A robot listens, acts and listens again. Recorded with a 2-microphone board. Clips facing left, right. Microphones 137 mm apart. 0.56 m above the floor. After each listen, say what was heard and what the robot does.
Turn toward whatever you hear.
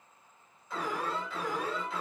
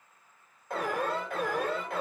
The alarm: about 55° right or 125° right. Turn 55° right.
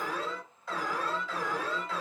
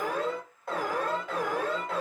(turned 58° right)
So it is at 60° right. Turn 60° right.
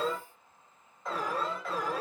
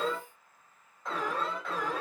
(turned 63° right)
Found it: an alarm, straight ahead, 2 to 4 m away.